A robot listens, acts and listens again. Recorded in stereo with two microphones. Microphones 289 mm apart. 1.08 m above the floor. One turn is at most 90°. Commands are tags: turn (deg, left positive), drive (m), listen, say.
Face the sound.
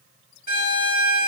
<turn deg="30"/>
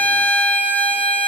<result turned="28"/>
<say>Facing the violin, 2 to 4 m away.</say>